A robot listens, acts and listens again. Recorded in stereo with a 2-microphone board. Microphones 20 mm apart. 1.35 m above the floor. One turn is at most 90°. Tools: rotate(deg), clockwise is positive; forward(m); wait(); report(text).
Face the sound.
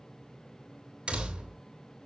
rotate(75)
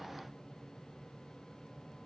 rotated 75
wait()
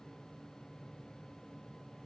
report("I heard a door slam, but can't make it out now. It was about straight ahead or 30° right.")